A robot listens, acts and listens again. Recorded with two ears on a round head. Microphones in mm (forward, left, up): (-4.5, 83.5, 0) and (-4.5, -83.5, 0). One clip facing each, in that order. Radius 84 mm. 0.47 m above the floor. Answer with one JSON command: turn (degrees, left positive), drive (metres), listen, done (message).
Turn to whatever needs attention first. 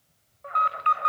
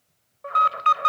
{"turn": -55}
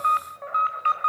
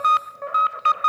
{"turn": -60}
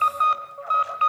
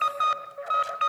{"turn": -20}
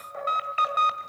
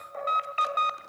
{"done": "Found it: an alarm, straight ahead."}